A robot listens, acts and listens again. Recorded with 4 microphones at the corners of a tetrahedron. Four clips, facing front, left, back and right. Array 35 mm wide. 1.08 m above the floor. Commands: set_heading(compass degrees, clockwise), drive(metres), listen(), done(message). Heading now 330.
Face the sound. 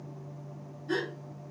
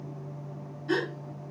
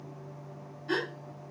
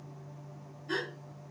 set_heading(200)
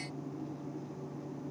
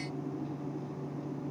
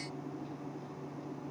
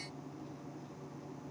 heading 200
done("I heard a gasp from this way, but can't make it out now.")